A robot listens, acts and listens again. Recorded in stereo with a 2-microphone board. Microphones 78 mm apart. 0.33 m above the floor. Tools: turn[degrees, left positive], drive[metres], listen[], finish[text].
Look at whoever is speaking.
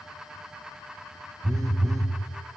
Action: listen[]
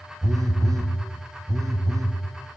Action: listen[]
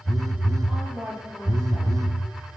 Thought: The woman speaking: about 15° right or 165° right.
Action: turn[-15]
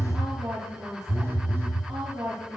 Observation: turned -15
Thought: So it is at 150° right.
Action: turn[-150]
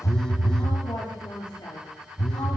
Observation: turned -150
Thought: The woman speaking is now 50° left.
Action: turn[50]
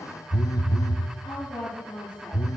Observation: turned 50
Thought: The woman speaking is now 15° left.
Action: turn[15]
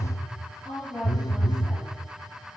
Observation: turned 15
Action: finish[Facing the woman speaking.]